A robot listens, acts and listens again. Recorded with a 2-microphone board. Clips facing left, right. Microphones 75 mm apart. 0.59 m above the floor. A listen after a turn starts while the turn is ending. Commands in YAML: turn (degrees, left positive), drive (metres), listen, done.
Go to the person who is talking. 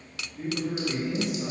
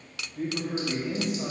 turn: -45
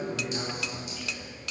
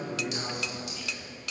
drive: 1.0
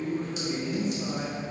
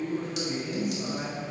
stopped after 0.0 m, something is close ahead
done: "Blocked. The man speaking is further on, straight ahead."